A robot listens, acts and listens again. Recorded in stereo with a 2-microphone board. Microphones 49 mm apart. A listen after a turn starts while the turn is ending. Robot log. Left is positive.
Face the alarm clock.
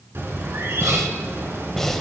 cmd idle
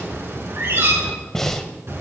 cmd idle
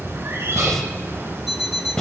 cmd yaw -30
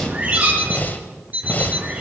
note: So it is at 145° right.
cmd yaw -145
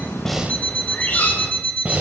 note: The alarm clock is now 30° left.
cmd yaw +30
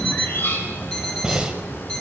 note: The alarm clock is now 15° left.
cmd yaw +15
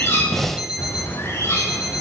note: The alarm clock is now 10° right.
cmd yaw -10
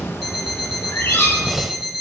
end: Found it: an alarm clock, straight ahead.